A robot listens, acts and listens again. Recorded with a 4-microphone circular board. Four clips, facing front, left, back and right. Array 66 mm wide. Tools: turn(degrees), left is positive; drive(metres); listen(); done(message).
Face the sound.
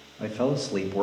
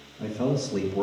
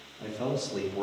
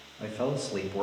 turn(degrees=-20)
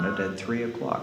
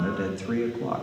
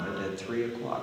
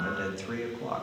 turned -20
done("Facing the man speaking, 1 to 2 m away.")